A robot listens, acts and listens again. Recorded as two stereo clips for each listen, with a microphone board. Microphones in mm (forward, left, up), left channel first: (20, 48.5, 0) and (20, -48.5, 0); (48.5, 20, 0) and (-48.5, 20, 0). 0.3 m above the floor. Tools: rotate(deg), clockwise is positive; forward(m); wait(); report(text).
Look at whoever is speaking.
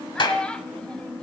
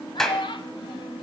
rotate(-10)
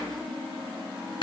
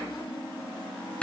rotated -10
wait()
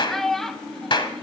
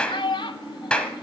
report("Found it: a child speaking, straight ahead, under 1 m away.")